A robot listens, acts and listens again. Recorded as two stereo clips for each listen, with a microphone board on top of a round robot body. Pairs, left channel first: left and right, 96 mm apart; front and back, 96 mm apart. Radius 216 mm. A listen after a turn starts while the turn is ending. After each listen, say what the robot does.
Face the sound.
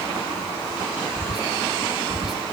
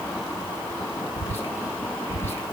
Turn 65° right.
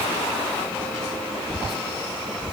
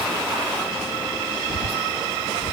Facing the whispering.